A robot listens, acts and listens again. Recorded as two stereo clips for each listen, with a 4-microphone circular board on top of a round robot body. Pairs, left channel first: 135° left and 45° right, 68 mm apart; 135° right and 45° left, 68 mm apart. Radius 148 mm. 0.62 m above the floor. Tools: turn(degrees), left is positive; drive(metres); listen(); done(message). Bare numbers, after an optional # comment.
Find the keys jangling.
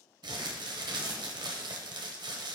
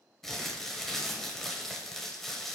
listen()
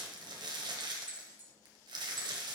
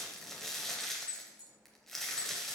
# The keys jangling: 105° right.
turn(-105)
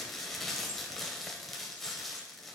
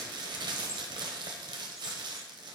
listen()
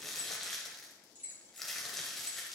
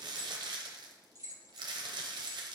# The keys jangling is now 20° left.
turn(20)
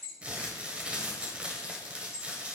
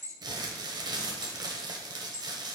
done("Found it: keys jangling, straight ahead.")